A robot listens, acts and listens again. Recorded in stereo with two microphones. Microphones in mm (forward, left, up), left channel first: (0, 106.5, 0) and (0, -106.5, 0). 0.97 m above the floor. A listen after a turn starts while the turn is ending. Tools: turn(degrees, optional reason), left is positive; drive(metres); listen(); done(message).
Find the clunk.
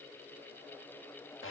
listen()
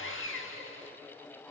listen()
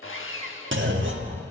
turn(degrees=-70, reason="The clunk: about 70° right or 110° right.")
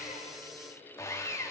listen()
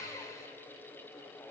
done("I heard a clunk, but can't make it out now. It was about straight ahead or 40° right.")